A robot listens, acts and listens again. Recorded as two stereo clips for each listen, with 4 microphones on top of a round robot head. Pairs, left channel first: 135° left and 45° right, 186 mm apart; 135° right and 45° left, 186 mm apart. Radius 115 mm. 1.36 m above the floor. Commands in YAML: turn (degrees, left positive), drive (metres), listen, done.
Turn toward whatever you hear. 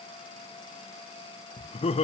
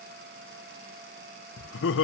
turn: -160
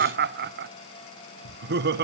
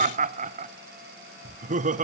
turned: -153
turn: -10
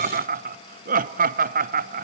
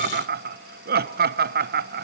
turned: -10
done: "Facing the laughter."